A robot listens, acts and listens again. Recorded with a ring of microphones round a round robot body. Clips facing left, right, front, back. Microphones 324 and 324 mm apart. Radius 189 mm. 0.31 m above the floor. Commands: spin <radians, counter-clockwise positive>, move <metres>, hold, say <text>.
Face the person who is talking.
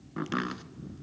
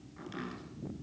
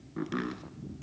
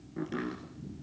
hold
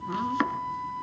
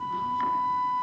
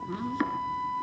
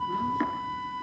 hold
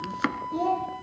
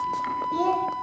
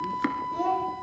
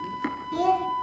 spin -2.62
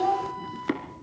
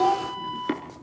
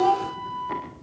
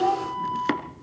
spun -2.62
spin -0.87
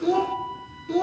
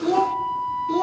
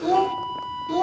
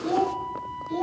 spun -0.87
spin -0.17
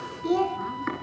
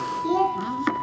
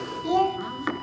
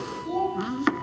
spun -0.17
say Facing the child speaking, 2 to 4 m away.